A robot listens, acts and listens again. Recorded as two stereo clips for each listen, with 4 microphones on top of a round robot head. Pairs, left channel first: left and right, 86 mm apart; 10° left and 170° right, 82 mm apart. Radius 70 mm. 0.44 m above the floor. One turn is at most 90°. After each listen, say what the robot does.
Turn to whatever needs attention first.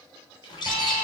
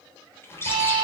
Turn 90° left.
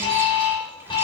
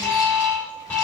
Turn 75° left.
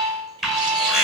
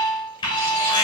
Facing the alarm.